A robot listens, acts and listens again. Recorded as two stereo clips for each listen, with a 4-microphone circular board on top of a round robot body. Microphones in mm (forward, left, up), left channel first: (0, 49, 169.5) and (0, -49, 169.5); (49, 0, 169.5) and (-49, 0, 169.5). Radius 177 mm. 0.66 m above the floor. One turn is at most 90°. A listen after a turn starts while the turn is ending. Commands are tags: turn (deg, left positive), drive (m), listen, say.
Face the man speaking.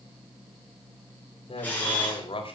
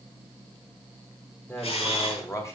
<turn deg="60"/>
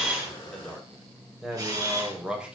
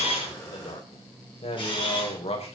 <turn deg="-10"/>
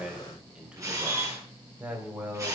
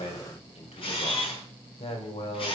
<turn deg="-15"/>
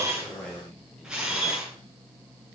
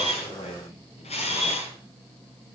<say>Facing the man speaking.</say>